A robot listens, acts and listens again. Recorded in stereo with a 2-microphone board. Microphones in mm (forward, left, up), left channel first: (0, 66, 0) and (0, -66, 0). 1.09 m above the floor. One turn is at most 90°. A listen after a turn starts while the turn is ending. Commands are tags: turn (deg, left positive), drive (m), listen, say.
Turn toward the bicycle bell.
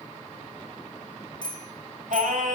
<turn deg="35"/>
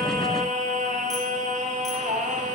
<listen/>
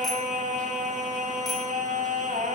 <listen/>
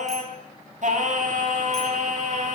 <say>I heard a bicycle bell, but can't make it out now. It was about straight ahead or 110° left.</say>